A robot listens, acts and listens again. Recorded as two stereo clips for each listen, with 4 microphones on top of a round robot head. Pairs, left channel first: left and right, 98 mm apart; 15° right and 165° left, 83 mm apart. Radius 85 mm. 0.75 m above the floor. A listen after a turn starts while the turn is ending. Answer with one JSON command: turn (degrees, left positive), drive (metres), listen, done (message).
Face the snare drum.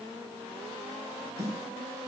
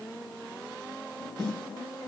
{"turn": -150}
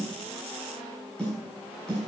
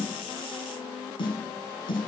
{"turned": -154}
{"done": "Found it: a snare drum, straight ahead."}